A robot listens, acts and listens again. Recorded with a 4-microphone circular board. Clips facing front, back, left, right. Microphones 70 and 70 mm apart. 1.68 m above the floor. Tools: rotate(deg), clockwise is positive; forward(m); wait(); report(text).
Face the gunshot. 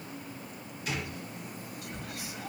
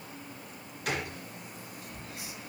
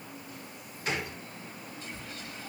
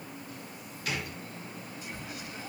rotate(-150)
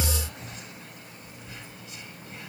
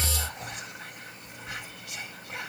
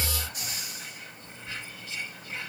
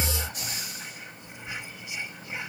report("Facing where the gunshot came from. I can't hear it now.")